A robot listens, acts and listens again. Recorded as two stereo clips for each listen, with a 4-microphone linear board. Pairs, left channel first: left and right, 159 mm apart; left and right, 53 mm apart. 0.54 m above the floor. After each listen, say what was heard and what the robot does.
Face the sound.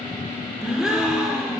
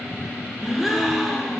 Turn 30° right.
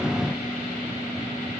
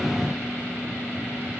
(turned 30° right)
Keep listening.
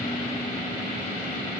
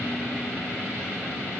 I heard a gasp, but can't make it out now. It was about 25° left or 145° right.